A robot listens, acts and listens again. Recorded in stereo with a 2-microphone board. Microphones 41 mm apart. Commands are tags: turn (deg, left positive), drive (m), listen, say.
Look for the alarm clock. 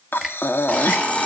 <turn deg="35"/>
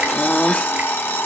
<turn deg="110"/>
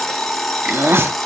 <say>Facing the alarm clock.</say>